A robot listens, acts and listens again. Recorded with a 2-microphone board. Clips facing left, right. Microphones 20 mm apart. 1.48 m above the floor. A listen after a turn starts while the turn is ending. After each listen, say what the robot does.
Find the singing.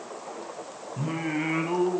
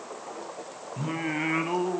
Turn 20° right.
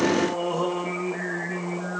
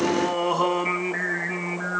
Turn 130° right.
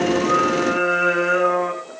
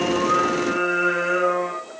Turn 15° left.
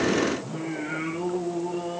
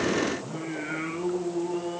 Found it: singing, straight ahead, over 4 m away.